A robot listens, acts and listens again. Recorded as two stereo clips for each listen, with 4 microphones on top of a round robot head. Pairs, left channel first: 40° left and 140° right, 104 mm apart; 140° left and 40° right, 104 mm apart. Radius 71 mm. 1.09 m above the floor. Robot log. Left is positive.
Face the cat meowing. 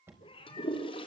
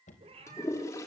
end: Found it: a cat meowing, straight ahead, 2 to 4 m away.